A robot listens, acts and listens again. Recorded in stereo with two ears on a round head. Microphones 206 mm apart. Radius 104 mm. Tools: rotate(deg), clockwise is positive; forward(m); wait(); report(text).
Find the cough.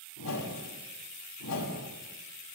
wait()
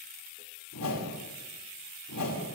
wait()
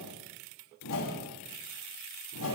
report("I can't make out a cough to turn to.")